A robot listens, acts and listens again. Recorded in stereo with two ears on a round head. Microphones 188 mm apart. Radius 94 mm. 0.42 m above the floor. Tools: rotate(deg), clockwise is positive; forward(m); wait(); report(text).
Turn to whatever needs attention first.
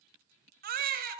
rotate(45)
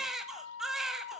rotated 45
report("Facing the baby crying, 1 to 2 m away.")